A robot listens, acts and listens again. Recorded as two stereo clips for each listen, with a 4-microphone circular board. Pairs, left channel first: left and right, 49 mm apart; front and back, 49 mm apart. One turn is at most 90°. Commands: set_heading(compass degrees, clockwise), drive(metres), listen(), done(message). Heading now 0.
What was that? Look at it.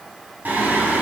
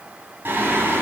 set_heading(90)
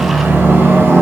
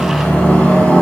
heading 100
set_heading(155)
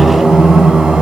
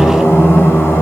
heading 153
done("Facing the singing, over 4 m away.")